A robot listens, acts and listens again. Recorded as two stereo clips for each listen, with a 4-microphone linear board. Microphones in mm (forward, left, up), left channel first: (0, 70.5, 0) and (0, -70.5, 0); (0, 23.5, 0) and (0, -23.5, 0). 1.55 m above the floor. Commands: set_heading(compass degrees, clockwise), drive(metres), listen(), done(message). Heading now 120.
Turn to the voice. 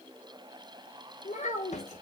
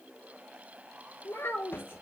set_heading(65)
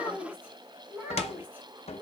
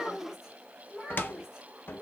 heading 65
set_heading(80)
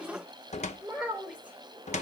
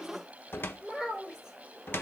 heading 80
set_heading(90)
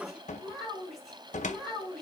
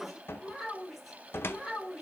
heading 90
done("Found it: a child speaking, straight ahead.")